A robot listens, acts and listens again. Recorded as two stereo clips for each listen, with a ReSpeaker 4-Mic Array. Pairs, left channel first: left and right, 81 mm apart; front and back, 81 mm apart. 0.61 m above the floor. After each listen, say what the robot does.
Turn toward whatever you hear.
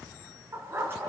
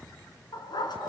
Turn 25° right.
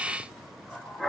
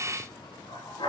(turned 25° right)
Found it: a dog barking, straight ahead.